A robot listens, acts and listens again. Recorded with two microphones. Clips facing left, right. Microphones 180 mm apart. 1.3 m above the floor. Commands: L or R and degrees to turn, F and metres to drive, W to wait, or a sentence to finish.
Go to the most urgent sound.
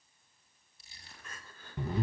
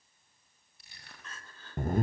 L30
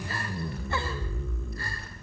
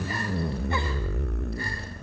W
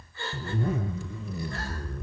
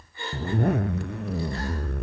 R20
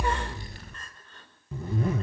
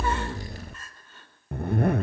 F1.0
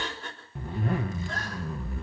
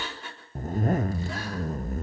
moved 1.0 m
R10
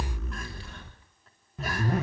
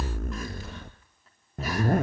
W
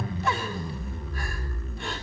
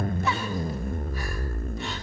W
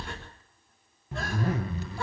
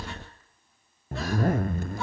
I heard crying from this way, but can't make it out now. I did not reach it.